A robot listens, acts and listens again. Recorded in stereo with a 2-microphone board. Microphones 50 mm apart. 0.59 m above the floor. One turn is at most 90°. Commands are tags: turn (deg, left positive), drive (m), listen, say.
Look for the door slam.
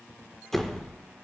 <turn deg="30"/>
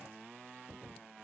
<listen/>
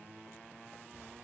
<say>I heard a door slam, but can't make it out now. It was about 25° right or 145° left.</say>